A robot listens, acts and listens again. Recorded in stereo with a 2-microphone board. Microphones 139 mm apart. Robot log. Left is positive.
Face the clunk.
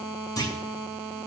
note: The clunk: about 25° left or 155° left.
cmd yaw +25
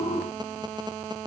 cmd idle
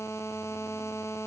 end: I heard a clunk, but can't make it out now. It was about straight ahead or 130° left.